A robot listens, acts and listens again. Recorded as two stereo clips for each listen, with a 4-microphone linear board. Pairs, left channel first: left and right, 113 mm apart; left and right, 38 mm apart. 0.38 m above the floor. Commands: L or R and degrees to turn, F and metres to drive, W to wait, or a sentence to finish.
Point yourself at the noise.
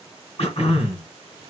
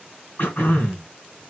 L60
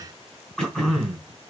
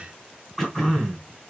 Found it: throat clearing, straight ahead.